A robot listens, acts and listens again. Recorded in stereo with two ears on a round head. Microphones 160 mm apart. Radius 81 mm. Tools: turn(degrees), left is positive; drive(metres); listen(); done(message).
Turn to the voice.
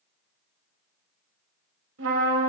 listen()
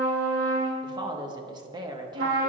turn(degrees=-25)
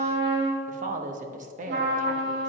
turn(degrees=-130)
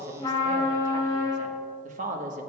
turn(degrees=-45)
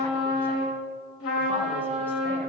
listen()
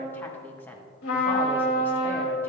turn(degrees=10)
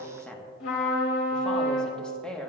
done("Found it: a woman speaking, straight ahead, 1 to 2 m away.")